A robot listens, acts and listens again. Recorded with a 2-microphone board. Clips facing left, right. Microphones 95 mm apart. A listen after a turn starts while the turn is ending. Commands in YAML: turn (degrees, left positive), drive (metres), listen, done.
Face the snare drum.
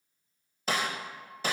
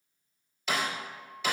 turn: 40
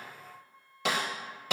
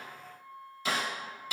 turn: 100
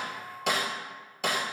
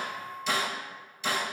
turn: 60
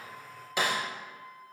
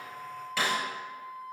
turn: 20
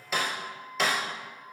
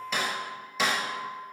done: "Found it: a snare drum, straight ahead, 2 to 4 m away."